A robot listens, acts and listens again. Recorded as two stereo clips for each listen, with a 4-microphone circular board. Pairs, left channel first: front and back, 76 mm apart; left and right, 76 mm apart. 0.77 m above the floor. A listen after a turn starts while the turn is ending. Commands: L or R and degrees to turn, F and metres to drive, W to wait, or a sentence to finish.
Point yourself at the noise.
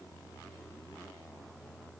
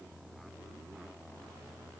W
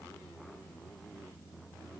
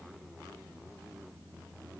W
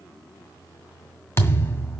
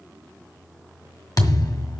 L55
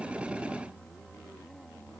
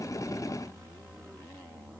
I heard a thud from this way, but can't make it out now.